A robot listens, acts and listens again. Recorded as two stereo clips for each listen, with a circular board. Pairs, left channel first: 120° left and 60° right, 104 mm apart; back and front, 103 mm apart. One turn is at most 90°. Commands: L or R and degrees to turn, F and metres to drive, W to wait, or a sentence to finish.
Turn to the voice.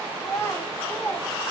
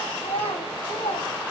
R90
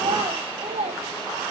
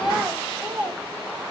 R75
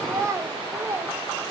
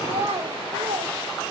L10
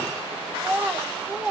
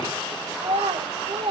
L20
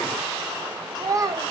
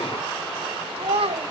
Found it: a child speaking, straight ahead.